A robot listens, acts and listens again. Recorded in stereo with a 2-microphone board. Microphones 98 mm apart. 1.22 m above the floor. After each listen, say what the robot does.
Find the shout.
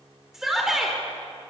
Turn 30° right.
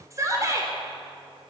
Turn 150° right.
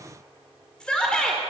Turn 10° left.
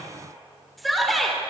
Found it: a shout, straight ahead.